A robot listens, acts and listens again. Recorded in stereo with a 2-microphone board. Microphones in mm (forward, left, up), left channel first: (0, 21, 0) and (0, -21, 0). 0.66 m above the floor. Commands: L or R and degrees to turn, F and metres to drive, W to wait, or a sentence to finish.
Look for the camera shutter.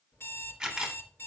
R30
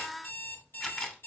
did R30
L20
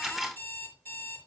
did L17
Found it: a camera shutter, straight ahead.